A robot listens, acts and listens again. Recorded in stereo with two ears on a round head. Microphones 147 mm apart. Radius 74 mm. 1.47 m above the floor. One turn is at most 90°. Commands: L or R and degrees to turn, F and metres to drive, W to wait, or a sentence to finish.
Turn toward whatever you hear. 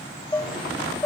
L15
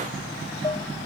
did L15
L90
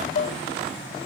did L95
L55
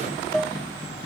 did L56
Found it: dishes clattering, straight ahead.